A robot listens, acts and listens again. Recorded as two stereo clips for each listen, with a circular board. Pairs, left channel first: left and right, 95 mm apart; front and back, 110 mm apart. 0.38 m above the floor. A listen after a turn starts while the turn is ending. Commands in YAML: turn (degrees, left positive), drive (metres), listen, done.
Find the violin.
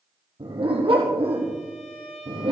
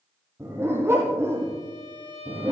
turn: 145
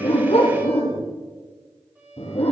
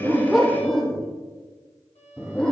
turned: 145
turn: -15
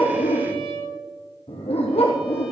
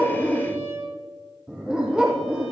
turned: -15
done: "Facing the violin, over 4 m away."